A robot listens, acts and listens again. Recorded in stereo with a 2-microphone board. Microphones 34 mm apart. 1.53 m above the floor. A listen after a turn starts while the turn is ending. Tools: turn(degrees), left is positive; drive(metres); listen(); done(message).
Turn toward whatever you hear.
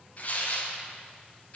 turn(degrees=45)
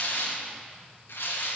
turn(degrees=90)
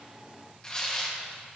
turn(degrees=20)
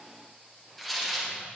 done("Found it: tearing paper, straight ahead, 1 to 2 m away.")